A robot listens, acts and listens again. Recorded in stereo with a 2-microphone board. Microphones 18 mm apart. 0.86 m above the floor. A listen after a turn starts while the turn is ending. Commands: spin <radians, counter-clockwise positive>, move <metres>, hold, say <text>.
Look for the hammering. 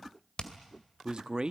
spin 0.79
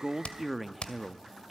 spin 1.66
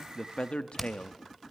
spin 0.17
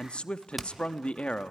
say Found it: hammering, straight ahead, 2 to 4 m away.